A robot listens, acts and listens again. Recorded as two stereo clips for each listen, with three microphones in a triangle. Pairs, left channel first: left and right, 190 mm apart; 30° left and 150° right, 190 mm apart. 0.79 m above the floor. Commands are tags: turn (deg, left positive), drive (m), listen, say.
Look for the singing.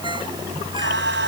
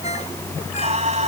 <turn deg="-95"/>
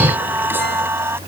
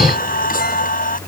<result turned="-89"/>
<turn deg="-15"/>
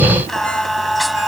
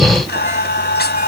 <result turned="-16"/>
<say>Facing the singing.</say>